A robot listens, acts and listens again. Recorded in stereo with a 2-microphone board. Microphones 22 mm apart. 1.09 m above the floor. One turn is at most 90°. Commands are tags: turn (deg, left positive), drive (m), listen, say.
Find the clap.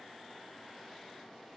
<listen/>
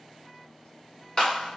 <turn deg="35"/>
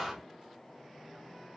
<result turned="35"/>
<say>Facing the clap.</say>